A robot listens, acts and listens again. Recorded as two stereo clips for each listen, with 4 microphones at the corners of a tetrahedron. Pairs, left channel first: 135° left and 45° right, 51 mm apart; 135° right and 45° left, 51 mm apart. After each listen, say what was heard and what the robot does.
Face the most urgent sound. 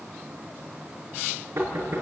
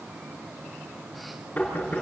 Keep listening.
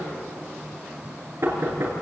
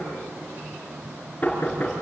Keep listening.
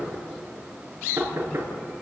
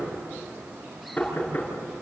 I can't make out anything urgent, only knocking.